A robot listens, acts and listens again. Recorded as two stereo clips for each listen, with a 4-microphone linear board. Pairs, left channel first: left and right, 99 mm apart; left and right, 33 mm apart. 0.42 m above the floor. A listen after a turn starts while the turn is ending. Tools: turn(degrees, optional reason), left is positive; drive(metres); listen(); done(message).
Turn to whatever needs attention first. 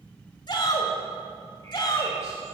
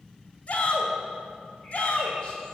turn(degrees=45, reason="The shout: about 45° left or 135° left.")
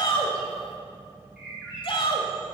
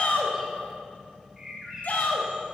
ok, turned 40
turn(degrees=85, reason="So it is at 85° left.")
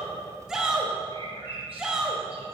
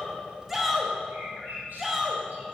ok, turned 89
done("Facing the shout, 1 to 2 m away.")